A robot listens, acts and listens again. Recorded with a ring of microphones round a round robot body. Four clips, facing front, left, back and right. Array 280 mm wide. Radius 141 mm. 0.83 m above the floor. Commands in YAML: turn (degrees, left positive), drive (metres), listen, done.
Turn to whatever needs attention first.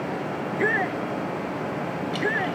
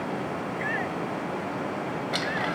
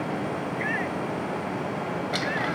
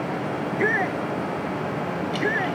turn: -50
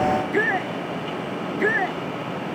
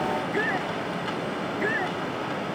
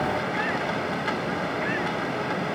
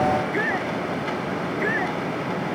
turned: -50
done: "Found it: a shout, straight ahead."